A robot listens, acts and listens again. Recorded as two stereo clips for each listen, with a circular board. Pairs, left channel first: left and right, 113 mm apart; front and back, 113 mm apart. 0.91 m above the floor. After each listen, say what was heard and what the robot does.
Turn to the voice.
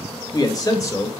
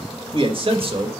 The man speaking: 150° left. Turn 150° left.
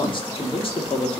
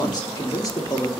The man speaking is now 60° left. Turn 60° left.
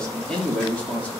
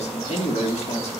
The man speaking is now 15° left. Turn 15° left.
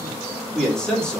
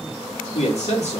The man speaking is now 10° left. Turn 10° left.
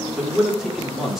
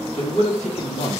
Found it: a man speaking, straight ahead, 2 to 4 m away.